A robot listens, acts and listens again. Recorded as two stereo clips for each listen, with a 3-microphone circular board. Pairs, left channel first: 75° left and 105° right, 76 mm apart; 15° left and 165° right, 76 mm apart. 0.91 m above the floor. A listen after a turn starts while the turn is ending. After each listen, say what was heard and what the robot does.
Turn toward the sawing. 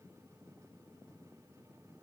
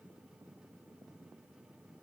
Keep listening.
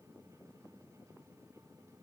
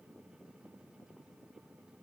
Keep listening.
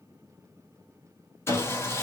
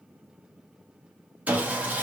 The sawing: 125° left. Turn 125° left.
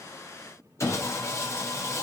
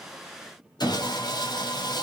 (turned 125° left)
The sawing is now 25° left. Turn 25° left.
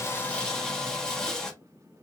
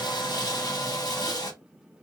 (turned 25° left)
The sawing is now 10° right. Turn 10° right.
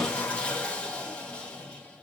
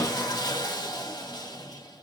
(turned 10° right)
Found it: sawing, straight ahead.